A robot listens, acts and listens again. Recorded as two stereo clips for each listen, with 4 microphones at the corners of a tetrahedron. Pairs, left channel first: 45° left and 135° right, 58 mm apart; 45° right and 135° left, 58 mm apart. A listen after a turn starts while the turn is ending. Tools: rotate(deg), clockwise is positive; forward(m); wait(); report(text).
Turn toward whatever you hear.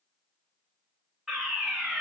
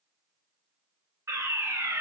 rotate(-135)
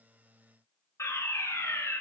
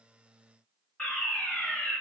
rotate(-20)
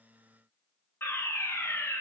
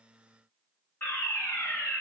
report("Found it: a fire alarm, straight ahead, 2 to 4 m away.")